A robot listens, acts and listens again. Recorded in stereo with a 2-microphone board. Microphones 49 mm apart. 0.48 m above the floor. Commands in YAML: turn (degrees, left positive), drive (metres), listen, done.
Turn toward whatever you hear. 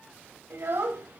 turn: -60
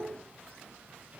turn: -20
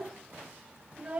turn: -30
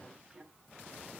listen: true
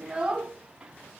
turn: -10
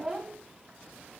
done: "Found it: a child speaking, straight ahead, 2 to 4 m away."